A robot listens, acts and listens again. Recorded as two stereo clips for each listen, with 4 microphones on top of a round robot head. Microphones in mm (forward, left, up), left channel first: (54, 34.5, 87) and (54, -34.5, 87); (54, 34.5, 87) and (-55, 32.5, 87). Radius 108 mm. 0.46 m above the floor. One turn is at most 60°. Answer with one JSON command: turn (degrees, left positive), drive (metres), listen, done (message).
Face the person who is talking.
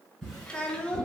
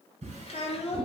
{"turn": 15}
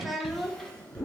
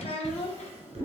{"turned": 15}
{"done": "Found it: a child speaking, straight ahead, under 1 m away."}